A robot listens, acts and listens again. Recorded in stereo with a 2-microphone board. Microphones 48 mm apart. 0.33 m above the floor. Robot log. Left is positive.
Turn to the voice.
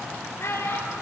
note: The child speaking: about 50° left or 130° left.
cmd yaw +50
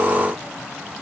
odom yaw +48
cmd idle
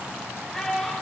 end: Facing the child speaking, over 4 m away.